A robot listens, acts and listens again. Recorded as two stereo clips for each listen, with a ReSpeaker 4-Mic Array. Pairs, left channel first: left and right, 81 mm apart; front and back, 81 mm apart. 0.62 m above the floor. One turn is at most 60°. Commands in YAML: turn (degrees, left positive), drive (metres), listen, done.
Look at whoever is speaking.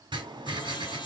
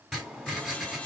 listen: true
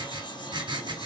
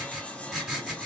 listen: true
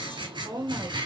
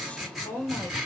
turn: -55
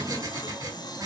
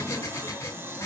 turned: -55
listen: true
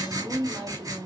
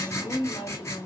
turn: -15
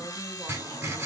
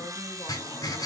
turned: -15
listen: true
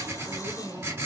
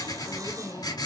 listen: true
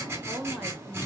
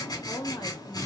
done: "Facing the woman speaking, 2 to 4 m away."